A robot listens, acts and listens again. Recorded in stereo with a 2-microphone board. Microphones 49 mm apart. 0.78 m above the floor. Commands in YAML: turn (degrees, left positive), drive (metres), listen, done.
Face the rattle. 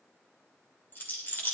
turn: 40
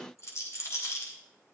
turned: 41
turn: 95
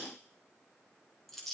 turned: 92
done: "Found it: a rattle, straight ahead."